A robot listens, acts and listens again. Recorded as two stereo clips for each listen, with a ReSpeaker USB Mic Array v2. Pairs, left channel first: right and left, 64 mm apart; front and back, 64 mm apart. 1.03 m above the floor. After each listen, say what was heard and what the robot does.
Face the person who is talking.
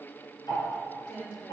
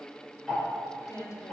The woman speaking: 35° right. Turn 35° right.
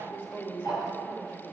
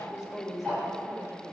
The woman speaking is now 30° right. Turn 30° right.
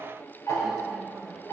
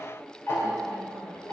Keep listening.
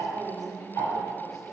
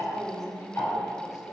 Found it: a woman speaking, straight ahead.